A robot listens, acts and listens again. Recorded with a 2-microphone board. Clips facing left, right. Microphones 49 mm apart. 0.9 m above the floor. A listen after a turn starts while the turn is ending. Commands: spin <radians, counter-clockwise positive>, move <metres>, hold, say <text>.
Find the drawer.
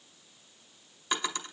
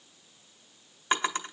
spin -0.61
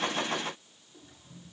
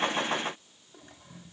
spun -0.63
hold
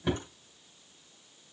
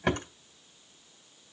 spin -1.92
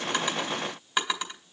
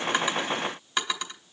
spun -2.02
say Facing the drawer, 1 to 2 m away.